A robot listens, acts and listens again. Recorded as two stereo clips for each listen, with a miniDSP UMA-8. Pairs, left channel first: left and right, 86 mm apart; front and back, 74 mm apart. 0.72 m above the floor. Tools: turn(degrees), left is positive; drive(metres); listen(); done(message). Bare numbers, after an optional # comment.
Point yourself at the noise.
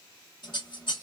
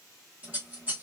# The scissors: 110° left.
turn(110)
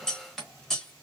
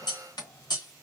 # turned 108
done("Facing the scissors, 1 to 2 m away.")